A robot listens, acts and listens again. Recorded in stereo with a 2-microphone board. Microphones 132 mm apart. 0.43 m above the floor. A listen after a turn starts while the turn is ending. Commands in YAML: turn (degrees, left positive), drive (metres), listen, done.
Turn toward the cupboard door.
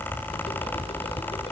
listen: true
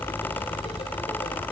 listen: true
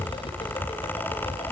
done: "I can't make out a cupboard door."